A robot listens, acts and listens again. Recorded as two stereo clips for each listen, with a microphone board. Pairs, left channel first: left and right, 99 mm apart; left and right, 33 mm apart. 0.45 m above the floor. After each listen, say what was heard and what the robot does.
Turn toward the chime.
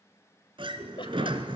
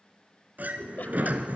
Keep listening.
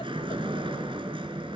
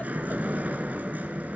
Keep listening.
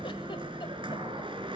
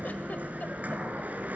I can't make out a chime, only a sliding door and a giggle.